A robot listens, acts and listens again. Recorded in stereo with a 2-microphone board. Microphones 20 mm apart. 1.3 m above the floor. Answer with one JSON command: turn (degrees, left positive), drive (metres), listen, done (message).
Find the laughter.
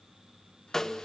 {"listen": true}
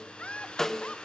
{"turn": 90}
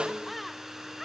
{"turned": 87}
{"done": "Found it: laughter, straight ahead."}